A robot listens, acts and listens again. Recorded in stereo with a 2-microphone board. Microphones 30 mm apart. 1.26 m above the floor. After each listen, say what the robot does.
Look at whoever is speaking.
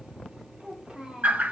Turn 20° right.
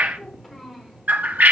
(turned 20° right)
Found it: a child speaking, straight ahead, 2 to 4 m away.